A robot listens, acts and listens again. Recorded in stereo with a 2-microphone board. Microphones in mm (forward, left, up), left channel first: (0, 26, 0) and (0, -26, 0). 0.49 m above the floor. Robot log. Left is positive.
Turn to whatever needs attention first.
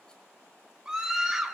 note: The scream: about 15° right or 165° right.
cmd yaw -15
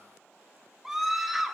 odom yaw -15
end: Facing the scream.